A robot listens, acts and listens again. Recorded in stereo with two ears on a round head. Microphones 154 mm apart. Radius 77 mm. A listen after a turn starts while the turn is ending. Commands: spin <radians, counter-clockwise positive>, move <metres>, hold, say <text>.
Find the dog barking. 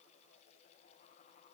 hold
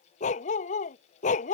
spin 0.79
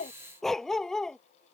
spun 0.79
say Found it: a dog barking, straight ahead.